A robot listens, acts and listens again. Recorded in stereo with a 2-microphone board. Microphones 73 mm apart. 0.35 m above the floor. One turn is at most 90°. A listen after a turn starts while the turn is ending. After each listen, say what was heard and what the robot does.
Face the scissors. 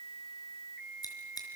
The scissors: about 65° left or 115° left. Turn 65° left.
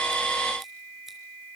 Keep listening.
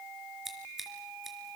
Facing the scissors.